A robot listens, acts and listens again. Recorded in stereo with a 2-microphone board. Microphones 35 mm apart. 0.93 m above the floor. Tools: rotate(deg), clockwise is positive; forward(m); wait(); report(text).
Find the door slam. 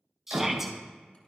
rotate(90)
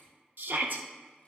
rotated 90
report("Facing where the door slam came from. I can't hear it now.")